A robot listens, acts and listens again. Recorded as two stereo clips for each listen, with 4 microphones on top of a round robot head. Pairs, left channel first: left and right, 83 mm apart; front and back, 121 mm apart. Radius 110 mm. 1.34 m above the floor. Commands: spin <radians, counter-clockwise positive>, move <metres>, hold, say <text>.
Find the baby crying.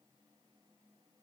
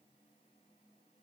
hold
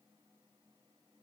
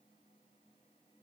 hold
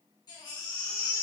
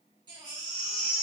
spin 2.18
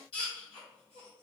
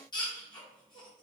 spin 0.87
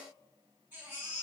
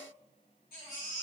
spin -0.26
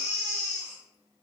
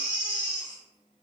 say Found it: a baby crying, straight ahead.